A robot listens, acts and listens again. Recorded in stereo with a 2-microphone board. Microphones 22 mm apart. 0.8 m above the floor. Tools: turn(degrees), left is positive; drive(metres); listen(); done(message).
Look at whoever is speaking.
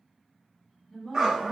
turn(degrees=30)
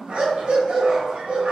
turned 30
done("Facing the woman speaking, 1 to 2 m away.")